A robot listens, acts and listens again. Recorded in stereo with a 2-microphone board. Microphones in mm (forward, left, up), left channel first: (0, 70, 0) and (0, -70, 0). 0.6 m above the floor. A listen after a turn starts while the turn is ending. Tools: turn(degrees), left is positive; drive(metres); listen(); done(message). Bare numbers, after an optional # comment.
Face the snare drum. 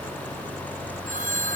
listen()
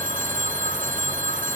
listen()
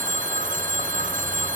done("I can't make out a snare drum to turn to.")